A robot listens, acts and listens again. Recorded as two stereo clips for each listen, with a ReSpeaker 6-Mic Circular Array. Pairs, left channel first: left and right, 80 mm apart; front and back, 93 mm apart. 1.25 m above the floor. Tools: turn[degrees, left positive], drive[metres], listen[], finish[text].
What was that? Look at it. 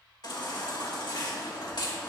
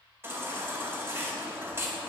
Thought: The baby crying: 115° left.
Action: turn[115]
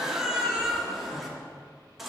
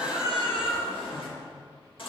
Action: finish[Found it: a baby crying, straight ahead, 1 to 2 m away.]